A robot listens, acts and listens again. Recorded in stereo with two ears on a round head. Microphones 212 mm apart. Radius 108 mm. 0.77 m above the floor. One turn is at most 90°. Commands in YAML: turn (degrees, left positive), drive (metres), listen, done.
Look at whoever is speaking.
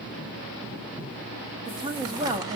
turn: -15
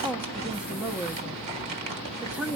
done: "Facing the woman speaking."